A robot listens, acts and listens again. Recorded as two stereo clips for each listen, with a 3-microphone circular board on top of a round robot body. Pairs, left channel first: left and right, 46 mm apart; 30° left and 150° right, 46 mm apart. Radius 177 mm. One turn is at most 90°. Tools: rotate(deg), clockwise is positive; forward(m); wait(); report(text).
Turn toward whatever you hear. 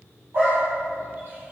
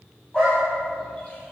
rotate(45)
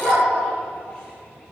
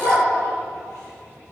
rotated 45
rotate(-20)
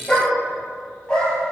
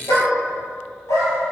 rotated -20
rotate(-20)
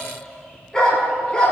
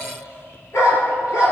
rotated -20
rotate(-15)
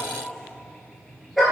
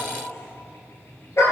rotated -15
report("Found it: a dog barking, straight ahead.")